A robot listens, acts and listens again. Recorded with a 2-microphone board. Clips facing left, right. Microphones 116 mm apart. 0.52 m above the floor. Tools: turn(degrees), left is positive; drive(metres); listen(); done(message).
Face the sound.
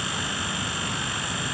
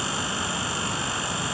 listen()
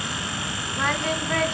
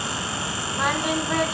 turn(degrees=-30)
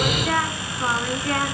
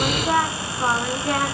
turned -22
turn(degrees=-20)
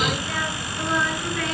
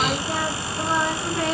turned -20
turn(degrees=-150)
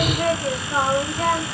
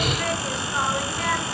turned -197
turn(degrees=45)
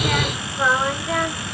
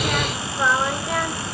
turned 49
done("Found it: singing, straight ahead, 2 to 4 m away.")